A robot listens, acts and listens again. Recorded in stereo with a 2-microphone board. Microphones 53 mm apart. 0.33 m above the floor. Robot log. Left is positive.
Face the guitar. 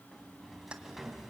cmd idle
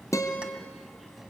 cmd yaw +90
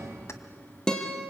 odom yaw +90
note: So it is at 15° left.
cmd yaw +15
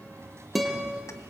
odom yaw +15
end: Found it: a guitar, straight ahead.